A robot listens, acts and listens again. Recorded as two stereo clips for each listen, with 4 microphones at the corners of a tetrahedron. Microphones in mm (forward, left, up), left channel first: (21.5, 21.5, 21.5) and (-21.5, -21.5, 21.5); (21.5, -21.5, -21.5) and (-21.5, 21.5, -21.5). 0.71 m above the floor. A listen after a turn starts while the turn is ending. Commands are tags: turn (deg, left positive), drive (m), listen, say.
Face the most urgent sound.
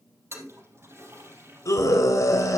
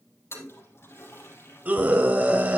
<turn deg="70"/>
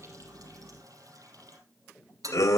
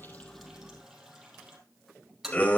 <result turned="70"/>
<turn deg="20"/>
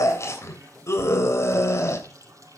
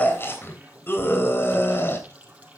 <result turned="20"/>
<say>Found it: a scream, straight ahead, 2 to 4 m away.</say>